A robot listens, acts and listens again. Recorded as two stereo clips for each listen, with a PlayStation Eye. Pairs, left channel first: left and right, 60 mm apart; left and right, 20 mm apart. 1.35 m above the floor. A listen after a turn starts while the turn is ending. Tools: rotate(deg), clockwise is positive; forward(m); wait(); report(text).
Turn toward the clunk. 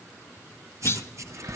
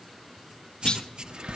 rotate(-50)
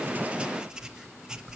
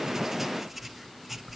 wait()
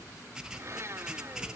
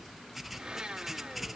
report("I heard a clunk, but can't make it out now. It was about straight ahead or 80° left.")